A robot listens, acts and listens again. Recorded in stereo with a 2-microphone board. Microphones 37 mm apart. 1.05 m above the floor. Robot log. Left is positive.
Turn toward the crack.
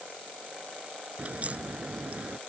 note: The crack: about 35° right or 145° right.
cmd yaw -35
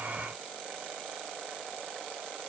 cmd idle
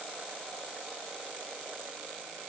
end: I heard a crack, but can't make it out now. It was about straight ahead or 110° right.